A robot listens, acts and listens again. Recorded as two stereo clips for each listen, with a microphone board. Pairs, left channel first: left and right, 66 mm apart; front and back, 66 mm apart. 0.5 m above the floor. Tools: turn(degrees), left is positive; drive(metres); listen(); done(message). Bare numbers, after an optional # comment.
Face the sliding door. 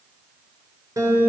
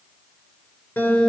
listen()
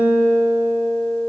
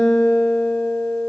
listen()
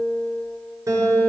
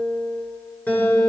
done("I can't make out a sliding door, only a guitar.")